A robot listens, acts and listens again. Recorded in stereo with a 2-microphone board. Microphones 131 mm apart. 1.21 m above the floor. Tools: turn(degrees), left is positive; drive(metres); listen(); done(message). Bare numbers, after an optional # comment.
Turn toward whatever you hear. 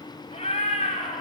# The cat meowing: about 60° left or 120° left.
turn(60)
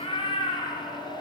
# So it is at 45° left.
turn(45)
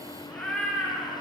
# The cat meowing is now 10° left.
turn(10)
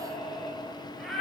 done("Facing the cat meowing, over 4 m away.")